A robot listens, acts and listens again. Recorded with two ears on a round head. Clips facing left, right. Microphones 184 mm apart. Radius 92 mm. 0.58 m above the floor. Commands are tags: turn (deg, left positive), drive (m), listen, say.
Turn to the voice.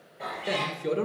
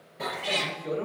<turn deg="65"/>
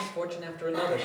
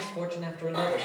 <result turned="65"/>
<turn deg="15"/>
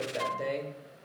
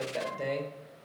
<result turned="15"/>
<say>Facing the man speaking.</say>